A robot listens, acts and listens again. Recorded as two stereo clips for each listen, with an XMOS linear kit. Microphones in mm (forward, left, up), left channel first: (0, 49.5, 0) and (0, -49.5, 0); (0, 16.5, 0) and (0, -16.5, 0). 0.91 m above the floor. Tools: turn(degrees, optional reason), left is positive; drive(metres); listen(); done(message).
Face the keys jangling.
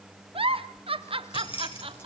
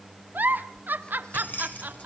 turn(degrees=65, reason="The keys jangling: about 65° left or 115° left.")
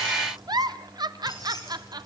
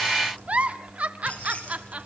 turn(degrees=40, reason="So it is at 40° left.")
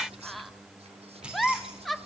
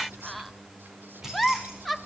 turn(degrees=-10, reason="The keys jangling is now 10° right.")
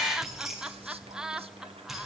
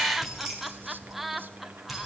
done("Facing the keys jangling, over 4 m away.")